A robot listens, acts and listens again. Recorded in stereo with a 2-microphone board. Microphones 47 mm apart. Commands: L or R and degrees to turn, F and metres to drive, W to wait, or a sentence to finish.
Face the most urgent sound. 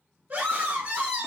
R35
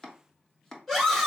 Found it: a scream, straight ahead.